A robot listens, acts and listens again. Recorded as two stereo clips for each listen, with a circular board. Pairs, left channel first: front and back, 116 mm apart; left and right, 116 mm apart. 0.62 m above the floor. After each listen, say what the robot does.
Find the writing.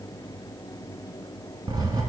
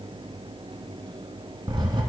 Turn 135° right.
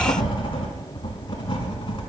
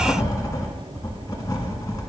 Turn 35° left.
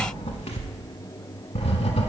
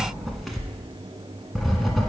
Facing the writing, 1 to 2 m away.